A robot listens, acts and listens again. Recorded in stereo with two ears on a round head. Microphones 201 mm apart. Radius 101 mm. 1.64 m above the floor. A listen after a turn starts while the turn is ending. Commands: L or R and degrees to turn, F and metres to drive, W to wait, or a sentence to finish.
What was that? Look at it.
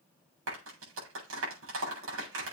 R60
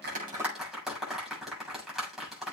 Found it: a clap, straight ahead.